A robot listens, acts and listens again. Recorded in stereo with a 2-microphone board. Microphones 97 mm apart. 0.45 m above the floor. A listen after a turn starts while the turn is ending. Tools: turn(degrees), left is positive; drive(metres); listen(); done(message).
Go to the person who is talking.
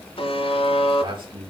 turn(degrees=-55)
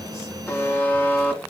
listen()
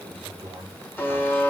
turn(degrees=-70)
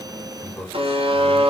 turn(degrees=25)
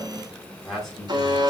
drive(metres=1.0)
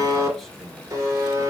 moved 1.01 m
listen()
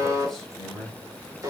drive(metres=1.0)
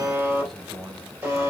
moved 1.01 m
drive(metres=1.0)
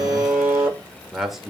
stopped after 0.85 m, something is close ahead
done("I am next to the man speaking.")